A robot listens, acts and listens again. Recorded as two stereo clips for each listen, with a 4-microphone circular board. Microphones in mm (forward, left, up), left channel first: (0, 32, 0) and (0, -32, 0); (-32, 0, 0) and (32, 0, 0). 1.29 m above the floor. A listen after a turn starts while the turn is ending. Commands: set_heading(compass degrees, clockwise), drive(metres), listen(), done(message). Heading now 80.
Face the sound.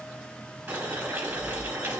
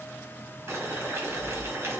set_heading(120)
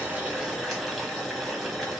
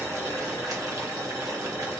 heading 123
done("Facing the boiling, 1 to 2 m away.")